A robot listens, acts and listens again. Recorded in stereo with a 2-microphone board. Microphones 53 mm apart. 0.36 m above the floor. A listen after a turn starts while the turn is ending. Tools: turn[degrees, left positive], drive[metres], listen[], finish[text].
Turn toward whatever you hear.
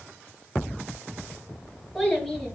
Action: turn[30]
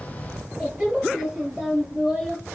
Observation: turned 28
Thought: So it is at 20° right.
Action: turn[-20]
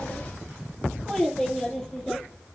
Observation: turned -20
Action: finish[Found it: a child speaking, straight ahead, over 4 m away.]